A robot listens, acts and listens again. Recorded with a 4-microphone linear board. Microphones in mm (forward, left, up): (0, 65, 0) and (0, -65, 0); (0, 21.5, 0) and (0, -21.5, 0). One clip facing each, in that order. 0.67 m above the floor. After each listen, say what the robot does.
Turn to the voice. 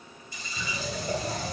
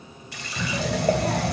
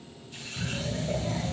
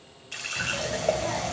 Turn 65° right.
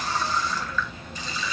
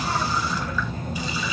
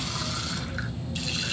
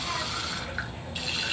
Turn 45° right.
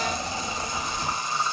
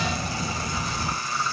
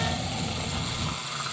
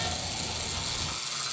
Turn 15° right.
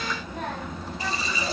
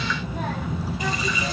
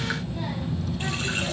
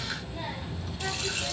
Facing the child speaking, 2 to 4 m away.